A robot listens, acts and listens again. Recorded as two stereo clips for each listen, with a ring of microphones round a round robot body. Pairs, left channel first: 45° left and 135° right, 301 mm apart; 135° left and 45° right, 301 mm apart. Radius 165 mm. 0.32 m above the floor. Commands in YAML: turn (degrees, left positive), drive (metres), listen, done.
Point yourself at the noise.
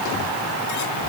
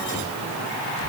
listen: true
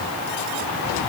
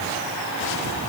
listen: true
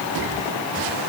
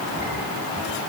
done: "I can't make out anything."